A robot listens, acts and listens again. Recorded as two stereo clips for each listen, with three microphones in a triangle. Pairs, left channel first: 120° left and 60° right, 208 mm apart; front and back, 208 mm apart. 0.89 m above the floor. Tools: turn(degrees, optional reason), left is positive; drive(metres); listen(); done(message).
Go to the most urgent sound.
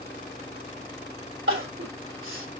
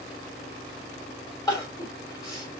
turn(degrees=-75, reason="The crying: 75° right.")
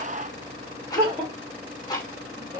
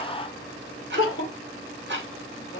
turn(degrees=10, reason="The crying is now 10° left.")
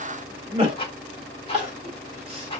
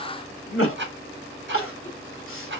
drive(metres=1.0)
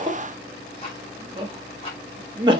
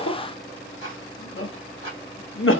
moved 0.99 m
turn(degrees=10, reason="The crying is now 10° left.")
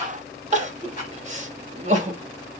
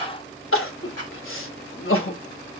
drive(metres=1.0)
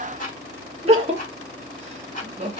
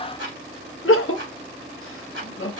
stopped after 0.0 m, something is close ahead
done("Arrived at the crying, straight ahead.")